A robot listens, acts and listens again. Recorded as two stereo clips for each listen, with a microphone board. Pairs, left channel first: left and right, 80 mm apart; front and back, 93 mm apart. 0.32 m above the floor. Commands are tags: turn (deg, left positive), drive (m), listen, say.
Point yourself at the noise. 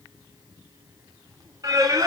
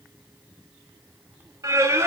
<turn deg="-120"/>
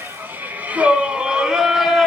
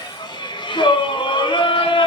<say>Facing the singing.</say>